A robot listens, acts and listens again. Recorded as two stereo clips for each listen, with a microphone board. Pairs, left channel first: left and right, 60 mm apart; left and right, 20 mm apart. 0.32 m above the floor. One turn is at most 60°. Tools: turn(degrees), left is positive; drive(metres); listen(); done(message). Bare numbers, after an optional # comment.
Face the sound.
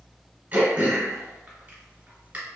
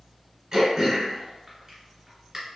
# The throat clearing: about 25° right or 155° right.
turn(-25)
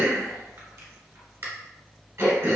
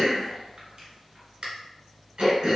# So it is at 130° right.
turn(-60)
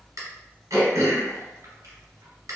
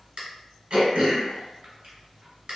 # The throat clearing is now 65° right.
turn(-60)
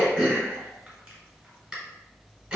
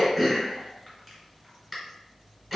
# The throat clearing is now 15° right.
turn(-15)
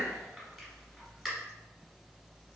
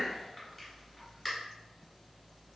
done("Found it: throat clearing, straight ahead, 1 to 2 m away.")